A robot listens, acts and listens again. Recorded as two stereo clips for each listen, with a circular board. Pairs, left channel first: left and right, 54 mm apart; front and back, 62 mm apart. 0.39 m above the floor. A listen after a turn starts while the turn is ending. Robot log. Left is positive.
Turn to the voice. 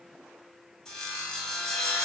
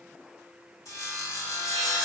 cmd idle
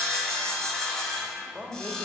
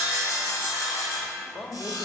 end: Facing the man speaking.